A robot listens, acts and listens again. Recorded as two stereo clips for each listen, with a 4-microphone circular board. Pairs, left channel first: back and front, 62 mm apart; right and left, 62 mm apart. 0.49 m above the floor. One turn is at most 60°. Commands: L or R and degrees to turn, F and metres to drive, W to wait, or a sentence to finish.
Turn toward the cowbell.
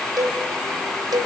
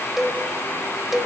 Found it: a cowbell, straight ahead, 1 to 2 m away.